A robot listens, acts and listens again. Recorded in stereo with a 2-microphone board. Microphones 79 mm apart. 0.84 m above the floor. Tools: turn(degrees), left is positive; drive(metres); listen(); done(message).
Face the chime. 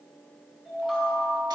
turn(degrees=-30)
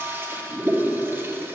listen()
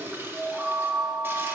turn(degrees=-145)
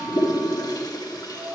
turn(degrees=-65)
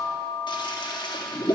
turn(degrees=-10)
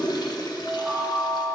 done("Facing the chime, 2 to 4 m away.")